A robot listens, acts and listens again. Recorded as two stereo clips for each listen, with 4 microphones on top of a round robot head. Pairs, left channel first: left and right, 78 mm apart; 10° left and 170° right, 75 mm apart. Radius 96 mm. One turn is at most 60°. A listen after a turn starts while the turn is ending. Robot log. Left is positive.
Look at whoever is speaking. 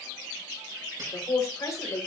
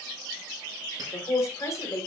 note: The man speaking: 55° left.
cmd yaw +55
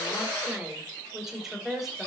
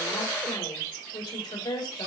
end: Facing the man speaking.